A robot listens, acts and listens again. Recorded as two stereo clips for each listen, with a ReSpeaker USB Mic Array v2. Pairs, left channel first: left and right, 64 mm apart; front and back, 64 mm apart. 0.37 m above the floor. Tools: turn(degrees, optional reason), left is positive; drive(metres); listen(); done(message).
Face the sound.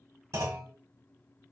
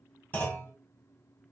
turn(degrees=-60, reason="The clunk: 60° right.")
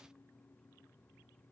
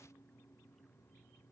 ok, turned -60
done("Facing where the clunk came from. I can't hear it now.")